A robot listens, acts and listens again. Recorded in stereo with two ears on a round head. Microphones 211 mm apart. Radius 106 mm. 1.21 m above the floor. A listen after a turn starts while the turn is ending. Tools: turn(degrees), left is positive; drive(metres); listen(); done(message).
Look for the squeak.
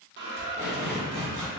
turn(degrees=-50)
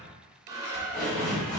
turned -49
turn(degrees=-15)
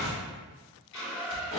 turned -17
done("Facing the squeak.")